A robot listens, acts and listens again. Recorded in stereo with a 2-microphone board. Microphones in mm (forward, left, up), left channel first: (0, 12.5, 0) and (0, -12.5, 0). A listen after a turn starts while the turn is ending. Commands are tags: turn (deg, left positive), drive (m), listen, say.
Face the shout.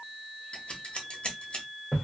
<listen/>
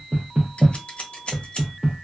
<listen/>
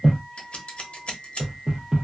<say>I can't make out a shout, only knocking and scissors.</say>